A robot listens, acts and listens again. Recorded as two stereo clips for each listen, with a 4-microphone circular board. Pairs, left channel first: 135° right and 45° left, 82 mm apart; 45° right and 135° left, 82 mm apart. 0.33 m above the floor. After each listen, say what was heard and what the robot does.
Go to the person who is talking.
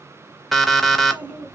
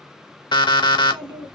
The child speaking: 115° left. Turn 115° left.
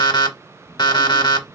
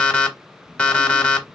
The child speaking is now 40° left. Turn 40° left.
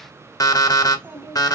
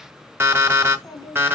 The child speaking is now 10° right. Turn 10° right.
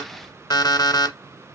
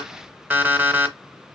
Keep listening.
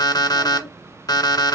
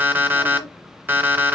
Drive 1.0 m forward.
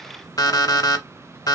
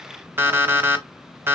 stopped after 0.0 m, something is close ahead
The child speaking is now 10° right. Turn 10° right.
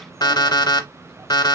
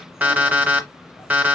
Something is in my way. I am facing the child speaking but have not reached it.